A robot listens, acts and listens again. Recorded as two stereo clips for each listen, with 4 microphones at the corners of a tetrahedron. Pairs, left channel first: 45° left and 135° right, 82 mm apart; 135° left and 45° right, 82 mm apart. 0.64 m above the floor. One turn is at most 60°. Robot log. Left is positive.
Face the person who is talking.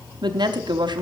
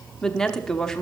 note: The woman speaking: 145° right.
cmd yaw -60
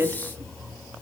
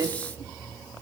note: The woman speaking is now 75° right.
cmd yaw -60
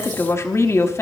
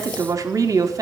end: Found it: a woman speaking, straight ahead, under 1 m away.